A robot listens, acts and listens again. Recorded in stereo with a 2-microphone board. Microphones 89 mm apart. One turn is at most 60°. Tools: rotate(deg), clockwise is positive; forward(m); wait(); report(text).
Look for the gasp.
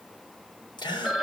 rotate(-55)
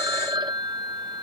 wait()
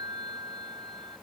report("I heard a gasp, but can't make it out now. It was about straight ahead or 70° left.")